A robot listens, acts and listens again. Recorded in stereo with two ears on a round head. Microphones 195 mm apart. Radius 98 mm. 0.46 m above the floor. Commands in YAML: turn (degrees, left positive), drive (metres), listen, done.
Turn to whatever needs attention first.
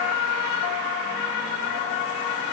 listen: true
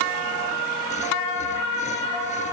listen: true
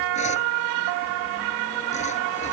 done: "I can't make out anything urgent to turn to."